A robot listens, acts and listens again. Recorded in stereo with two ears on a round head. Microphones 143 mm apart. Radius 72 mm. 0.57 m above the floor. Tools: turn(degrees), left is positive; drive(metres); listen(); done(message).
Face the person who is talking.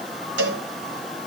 listen()
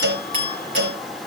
listen()
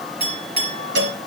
done("I can't make out anyone speaking to turn to.")